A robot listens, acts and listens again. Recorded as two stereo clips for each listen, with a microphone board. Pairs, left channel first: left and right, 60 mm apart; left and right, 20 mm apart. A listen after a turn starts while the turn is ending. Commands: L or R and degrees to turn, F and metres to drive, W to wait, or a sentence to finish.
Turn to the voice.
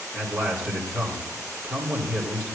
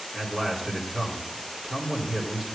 R15
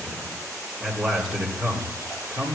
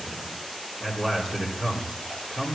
Found it: a man speaking, straight ahead.